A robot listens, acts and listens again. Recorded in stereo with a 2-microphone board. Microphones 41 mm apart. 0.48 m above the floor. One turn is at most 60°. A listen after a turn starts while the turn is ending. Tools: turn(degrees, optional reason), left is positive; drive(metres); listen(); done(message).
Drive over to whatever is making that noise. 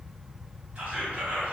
turn(degrees=-30, reason="The whispering: about 30° right or 150° right.")
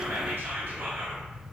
turn(degrees=-60, reason="So it is at 110° right.")
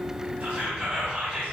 turn(degrees=-40, reason="The whispering is now 40° right.")
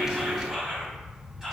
turn(degrees=-15, reason="The whispering is now 15° right.")
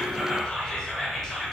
drive(metres=1.0)
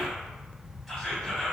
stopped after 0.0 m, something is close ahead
done("Blocked. The whispering is further on, straight ahead.")